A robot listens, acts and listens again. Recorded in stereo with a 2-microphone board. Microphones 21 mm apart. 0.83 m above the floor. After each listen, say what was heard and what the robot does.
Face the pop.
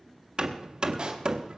The pop: about 50° right or 130° right. Turn 50° right.
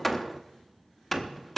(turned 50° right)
Keep listening.
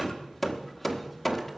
I heard a pop, but can't make it out now. It was about straight ahead or 80° right.